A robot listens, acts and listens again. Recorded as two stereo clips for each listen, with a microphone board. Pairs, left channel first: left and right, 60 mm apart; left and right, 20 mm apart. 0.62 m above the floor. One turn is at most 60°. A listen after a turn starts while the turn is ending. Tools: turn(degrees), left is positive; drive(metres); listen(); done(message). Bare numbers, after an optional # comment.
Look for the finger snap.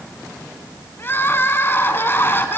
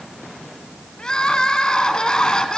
listen()
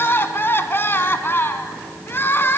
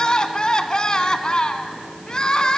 listen()
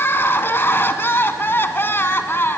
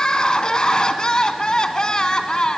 done("I can't make out a finger snap to turn to.")